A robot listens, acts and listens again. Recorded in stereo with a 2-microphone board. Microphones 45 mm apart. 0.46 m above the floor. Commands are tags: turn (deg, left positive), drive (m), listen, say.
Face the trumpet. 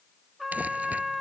<turn deg="-30"/>
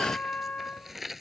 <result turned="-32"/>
<turn deg="25"/>
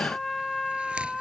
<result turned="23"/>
<say>Facing the trumpet.</say>